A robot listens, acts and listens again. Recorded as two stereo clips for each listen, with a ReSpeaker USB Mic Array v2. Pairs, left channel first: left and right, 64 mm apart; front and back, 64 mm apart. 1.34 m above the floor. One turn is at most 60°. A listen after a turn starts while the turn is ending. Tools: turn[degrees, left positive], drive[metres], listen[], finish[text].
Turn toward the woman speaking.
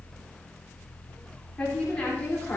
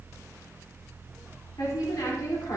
Thought: The woman speaking: 20° left.
Action: turn[20]
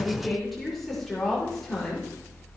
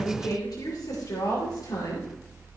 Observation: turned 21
Action: finish[Found it: a woman speaking, straight ahead, over 4 m away.]